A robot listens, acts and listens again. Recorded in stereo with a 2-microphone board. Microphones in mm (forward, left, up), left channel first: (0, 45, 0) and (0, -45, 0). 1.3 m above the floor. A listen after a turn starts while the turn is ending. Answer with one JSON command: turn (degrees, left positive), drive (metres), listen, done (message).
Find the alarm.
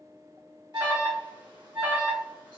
{"turn": -55}
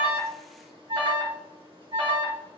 {"turn": -70}
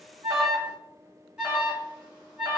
{"turn": -10}
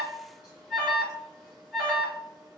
{"done": "Found it: an alarm, straight ahead."}